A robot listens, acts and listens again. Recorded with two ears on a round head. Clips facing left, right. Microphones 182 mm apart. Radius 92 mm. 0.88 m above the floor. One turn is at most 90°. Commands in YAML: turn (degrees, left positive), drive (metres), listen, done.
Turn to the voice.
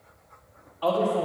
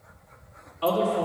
turn: -35
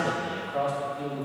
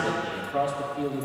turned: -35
turn: -90
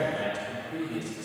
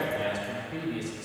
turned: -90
turn: 15
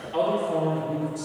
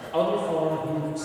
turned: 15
turn: 10
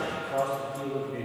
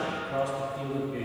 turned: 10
done: "Facing the man speaking, 2 to 4 m away."